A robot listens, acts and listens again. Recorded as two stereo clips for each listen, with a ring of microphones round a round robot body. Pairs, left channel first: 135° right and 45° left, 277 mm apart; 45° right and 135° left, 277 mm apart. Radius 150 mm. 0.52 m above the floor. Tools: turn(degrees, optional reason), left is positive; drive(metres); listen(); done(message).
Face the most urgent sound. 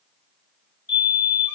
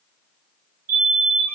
turn(degrees=170, reason="The fire alarm: 170° left.")
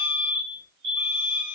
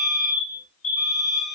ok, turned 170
done("Facing the fire alarm.")